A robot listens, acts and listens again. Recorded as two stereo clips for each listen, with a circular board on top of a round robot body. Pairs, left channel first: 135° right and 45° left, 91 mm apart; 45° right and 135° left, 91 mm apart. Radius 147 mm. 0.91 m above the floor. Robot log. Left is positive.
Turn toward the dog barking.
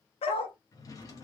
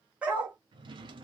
note: The dog barking: 150° right.
cmd yaw -150
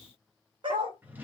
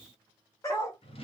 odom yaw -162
note: The dog barking is now 10° left.
cmd yaw +10
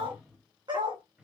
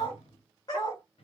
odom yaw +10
end: Facing the dog barking.